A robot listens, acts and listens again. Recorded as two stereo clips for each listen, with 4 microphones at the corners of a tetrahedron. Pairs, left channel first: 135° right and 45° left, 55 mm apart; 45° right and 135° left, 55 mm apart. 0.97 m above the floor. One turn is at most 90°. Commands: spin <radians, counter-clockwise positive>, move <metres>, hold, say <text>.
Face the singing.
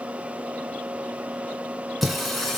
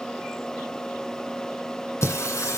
spin -0.96
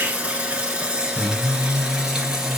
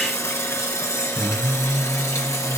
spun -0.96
spin -0.61
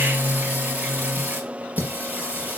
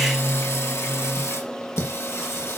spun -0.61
spin -0.26
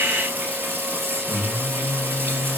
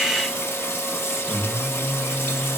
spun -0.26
say Facing the singing.